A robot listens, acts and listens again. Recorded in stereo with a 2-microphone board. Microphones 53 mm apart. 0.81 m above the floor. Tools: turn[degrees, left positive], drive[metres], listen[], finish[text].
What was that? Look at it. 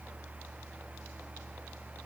Action: listen[]
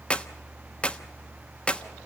Thought: The clap: about 25° left or 155° left.
Action: turn[25]
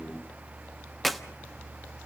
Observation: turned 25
Action: finish[Facing the clap.]